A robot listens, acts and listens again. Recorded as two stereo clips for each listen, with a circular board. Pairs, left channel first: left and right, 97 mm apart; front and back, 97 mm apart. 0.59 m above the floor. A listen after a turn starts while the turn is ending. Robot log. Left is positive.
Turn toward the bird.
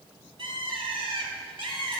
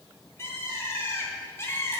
note: The bird: 65° right.
cmd yaw -65
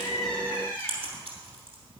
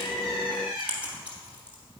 note: The bird is now 20° left.
cmd yaw +20
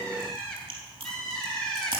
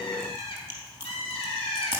end: Facing the bird, 1 to 2 m away.